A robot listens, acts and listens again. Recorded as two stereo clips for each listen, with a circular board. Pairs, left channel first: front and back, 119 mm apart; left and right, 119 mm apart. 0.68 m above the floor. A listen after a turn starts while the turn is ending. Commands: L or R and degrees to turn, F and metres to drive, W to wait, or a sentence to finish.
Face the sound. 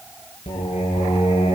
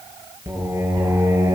R30
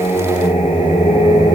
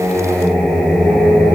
Facing the singing, over 4 m away.